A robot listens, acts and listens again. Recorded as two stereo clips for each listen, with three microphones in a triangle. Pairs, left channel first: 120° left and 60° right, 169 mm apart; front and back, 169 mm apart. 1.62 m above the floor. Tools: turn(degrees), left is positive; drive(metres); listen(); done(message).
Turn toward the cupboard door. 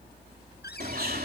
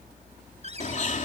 turn(degrees=130)
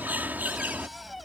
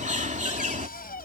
turn(degrees=30)
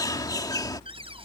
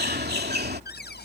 done("Found it: a cupboard door, straight ahead.")